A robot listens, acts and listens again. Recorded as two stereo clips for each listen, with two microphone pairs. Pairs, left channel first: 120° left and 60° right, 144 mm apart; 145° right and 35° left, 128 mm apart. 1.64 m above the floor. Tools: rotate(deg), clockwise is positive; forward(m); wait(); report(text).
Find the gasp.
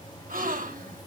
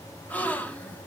rotate(70)
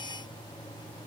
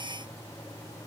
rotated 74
report("I heard a gasp from this way, but can't make it out now.")